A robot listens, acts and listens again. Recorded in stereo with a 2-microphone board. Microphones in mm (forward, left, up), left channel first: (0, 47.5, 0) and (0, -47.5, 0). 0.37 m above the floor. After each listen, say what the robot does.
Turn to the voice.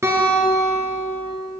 Keep listening.
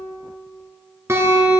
Keep listening.
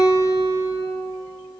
I can't make out anyone speaking, only a guitar.